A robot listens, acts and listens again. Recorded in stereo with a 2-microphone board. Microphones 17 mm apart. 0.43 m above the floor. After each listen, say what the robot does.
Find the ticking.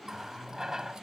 Keep listening.
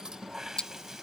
Turn 65° left.
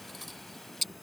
Found it: ticking, straight ahead.